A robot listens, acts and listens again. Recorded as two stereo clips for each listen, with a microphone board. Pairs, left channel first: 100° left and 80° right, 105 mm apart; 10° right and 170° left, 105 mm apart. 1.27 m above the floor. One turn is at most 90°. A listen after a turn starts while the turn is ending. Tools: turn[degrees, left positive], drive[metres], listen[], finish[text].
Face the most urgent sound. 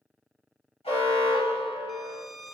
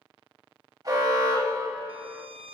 Thought: The alarm: 120° left.
Action: turn[90]
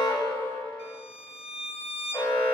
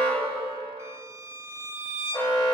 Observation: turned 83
Thought: The alarm is now 35° left.
Action: turn[35]
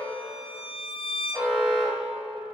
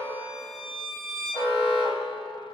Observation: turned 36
Action: finish[Found it: an alarm, straight ahead.]